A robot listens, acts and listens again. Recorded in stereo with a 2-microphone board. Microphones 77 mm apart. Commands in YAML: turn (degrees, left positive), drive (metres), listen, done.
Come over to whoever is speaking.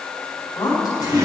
turn: 55
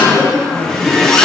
drive: 1.0
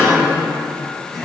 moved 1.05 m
drive: 1.0
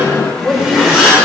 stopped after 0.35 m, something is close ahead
turn: 10
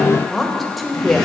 done: "Arrived at the woman speaking, straight ahead."